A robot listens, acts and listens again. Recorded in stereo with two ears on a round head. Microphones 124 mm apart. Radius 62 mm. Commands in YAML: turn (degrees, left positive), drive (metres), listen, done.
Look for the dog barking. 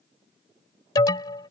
listen: true
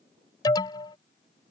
listen: true
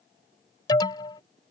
done: "I can't make out a dog barking to turn to."